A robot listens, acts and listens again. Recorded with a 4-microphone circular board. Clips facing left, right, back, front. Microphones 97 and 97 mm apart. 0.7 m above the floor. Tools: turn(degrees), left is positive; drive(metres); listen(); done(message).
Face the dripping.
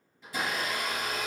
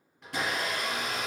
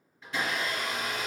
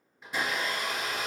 listen()
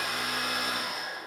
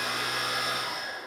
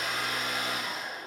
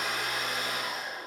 listen()
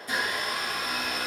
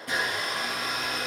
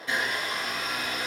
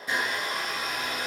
done("I can't make out dripping, only a blender.")